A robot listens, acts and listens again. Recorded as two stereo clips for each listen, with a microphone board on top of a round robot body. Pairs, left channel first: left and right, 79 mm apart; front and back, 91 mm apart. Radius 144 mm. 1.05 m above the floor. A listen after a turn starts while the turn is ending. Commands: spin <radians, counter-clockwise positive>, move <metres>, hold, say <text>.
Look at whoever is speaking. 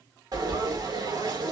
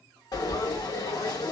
hold
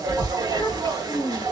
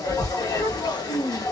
spin 0.70
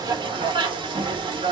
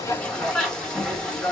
hold
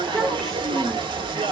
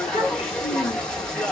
spin 0.17
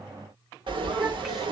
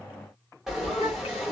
hold
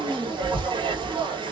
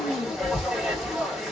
say Facing the child speaking, 1 to 2 m away.